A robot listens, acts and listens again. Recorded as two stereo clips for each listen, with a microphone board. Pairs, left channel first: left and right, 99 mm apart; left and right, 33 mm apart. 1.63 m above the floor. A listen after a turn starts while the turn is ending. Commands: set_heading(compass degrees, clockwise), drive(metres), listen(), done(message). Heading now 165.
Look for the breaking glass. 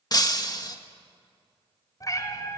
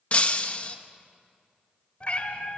set_heading(125)
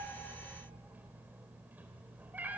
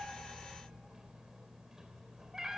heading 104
listen()
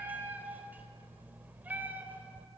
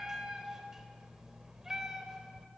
done("I heard breaking glass, but can't make it out now. It was about 20° right or 80° left.")